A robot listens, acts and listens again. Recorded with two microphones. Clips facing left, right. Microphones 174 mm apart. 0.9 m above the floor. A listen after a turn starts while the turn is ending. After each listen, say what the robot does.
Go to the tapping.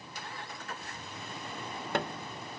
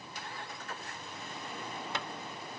Turn 60° left.
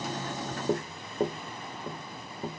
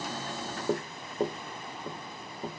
Drive 1.0 m forward.
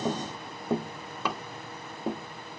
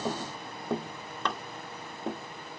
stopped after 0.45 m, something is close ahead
Turn 10° left.
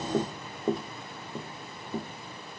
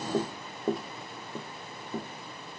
Blocked. The tapping is further on, straight ahead.